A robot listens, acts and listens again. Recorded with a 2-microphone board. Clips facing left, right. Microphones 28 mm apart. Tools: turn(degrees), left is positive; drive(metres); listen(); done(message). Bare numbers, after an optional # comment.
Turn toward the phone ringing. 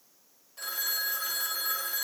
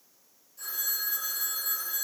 turn(90)
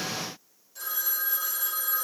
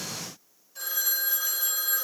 # So it is at 10° right.
turn(-10)
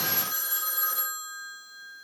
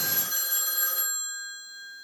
done("Facing the phone ringing.")